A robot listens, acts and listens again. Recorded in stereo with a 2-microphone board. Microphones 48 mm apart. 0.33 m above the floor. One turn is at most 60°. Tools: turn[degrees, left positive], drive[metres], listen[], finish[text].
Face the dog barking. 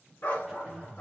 Thought: The dog barking: about 55° left or 125° left.
Action: turn[55]
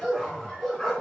Thought: So it is at 15° left.
Action: turn[15]
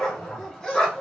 Thought: The dog barking is now 20° left.
Action: turn[20]
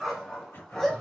Thought: The dog barking is now 10° left.
Action: turn[10]
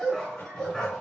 Thought: The dog barking is now 15° left.
Action: turn[15]
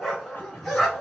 Action: finish[Facing the dog barking.]